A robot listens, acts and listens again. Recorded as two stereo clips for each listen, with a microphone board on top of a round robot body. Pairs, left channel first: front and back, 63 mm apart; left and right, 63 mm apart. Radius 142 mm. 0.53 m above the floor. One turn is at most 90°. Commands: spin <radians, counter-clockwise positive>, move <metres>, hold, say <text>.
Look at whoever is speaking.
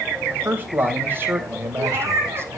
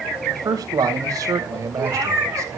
spin -1.57
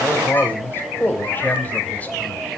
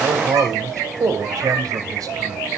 spin -1.05
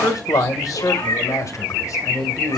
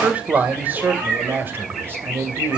spin -0.61
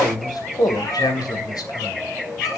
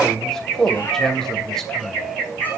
say Found it: a man speaking, straight ahead, 2 to 4 m away.